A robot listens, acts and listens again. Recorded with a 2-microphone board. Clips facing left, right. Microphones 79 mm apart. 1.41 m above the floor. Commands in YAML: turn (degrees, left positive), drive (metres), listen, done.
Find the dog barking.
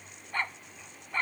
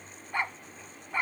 turn: -30
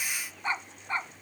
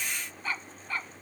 turn: 25
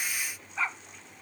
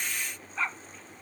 done: "Found it: a dog barking, straight ahead."